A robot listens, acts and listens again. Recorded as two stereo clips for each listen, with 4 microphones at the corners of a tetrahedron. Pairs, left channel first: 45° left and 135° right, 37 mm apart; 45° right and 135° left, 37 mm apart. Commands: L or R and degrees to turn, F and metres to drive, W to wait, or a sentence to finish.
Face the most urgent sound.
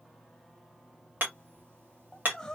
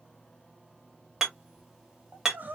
L120
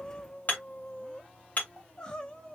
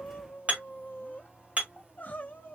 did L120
R15
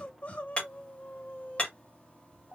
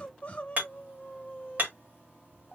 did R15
Facing the crying.